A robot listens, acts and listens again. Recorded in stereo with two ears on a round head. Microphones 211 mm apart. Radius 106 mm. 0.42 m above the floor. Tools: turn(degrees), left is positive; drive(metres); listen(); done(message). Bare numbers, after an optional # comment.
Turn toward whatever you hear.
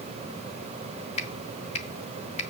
# The finger snap: about 30° left or 150° left.
turn(30)
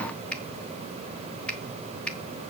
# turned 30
done("Found it: a finger snap, straight ahead.")